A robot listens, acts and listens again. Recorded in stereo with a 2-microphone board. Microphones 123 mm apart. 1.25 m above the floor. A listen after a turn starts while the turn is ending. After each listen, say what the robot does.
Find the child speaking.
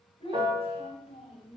Turn 45° left.
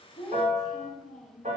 Facing the child speaking.